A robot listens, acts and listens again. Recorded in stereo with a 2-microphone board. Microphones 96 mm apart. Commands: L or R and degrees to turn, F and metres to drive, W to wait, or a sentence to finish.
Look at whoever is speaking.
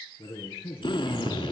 L70
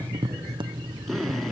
W
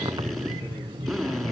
W
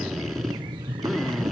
I heard a man speaking, but can't make it out now. It was about straight ahead or 40° left.